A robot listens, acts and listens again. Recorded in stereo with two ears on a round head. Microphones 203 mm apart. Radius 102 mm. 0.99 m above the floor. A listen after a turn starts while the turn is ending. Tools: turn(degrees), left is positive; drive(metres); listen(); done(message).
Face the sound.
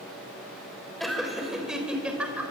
turn(degrees=-30)
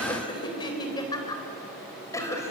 turn(degrees=10)
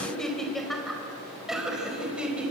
done("Facing the laughter.")